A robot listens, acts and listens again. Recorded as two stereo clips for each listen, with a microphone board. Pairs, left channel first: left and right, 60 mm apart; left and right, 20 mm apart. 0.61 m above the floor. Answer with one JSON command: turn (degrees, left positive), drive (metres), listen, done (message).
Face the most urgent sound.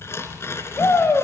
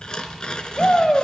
{"turn": 50}
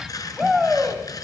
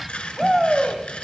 {"done": "Facing the shout."}